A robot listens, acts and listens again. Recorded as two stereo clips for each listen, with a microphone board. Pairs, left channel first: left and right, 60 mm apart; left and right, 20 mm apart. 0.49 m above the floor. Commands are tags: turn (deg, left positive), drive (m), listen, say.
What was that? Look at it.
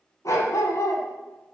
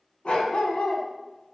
<turn deg="65"/>
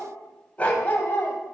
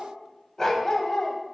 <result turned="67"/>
<turn deg="35"/>
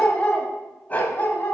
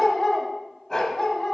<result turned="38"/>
<turn deg="35"/>
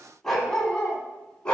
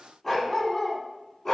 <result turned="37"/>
<turn deg="15"/>
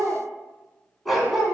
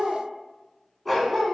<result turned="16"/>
<say>Found it: a dog barking, straight ahead, 1 to 2 m away.</say>